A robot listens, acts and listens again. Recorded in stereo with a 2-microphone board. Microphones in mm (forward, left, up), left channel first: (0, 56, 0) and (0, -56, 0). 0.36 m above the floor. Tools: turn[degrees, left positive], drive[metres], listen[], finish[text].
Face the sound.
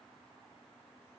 Action: listen[]
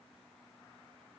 Action: listen[]
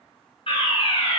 Thought: The fire alarm: about 55° left or 125° left.
Action: turn[55]
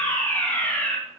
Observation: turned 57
Thought: So it is at 20° left.
Action: turn[20]
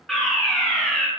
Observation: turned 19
Action: finish[Found it: a fire alarm, straight ahead, 2 to 4 m away.]